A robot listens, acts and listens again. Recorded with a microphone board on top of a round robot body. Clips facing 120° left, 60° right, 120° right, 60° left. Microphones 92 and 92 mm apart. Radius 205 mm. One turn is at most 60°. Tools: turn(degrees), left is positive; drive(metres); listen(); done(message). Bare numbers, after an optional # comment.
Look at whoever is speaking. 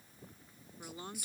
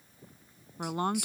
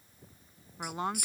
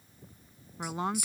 # The woman speaking: 30° right.
turn(-30)
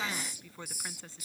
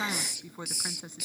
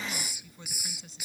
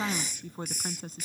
# The woman speaking is now 15° left.
turn(15)
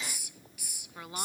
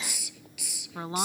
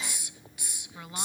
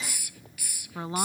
done("Facing the woman speaking.")